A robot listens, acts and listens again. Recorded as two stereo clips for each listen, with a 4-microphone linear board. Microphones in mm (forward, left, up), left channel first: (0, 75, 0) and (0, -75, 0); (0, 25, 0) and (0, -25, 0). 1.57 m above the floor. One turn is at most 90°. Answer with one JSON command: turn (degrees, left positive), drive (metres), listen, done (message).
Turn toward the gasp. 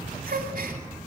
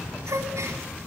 {"turn": -90}
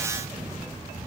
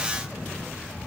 {"done": "Facing where the gasp came from. I can't hear it now."}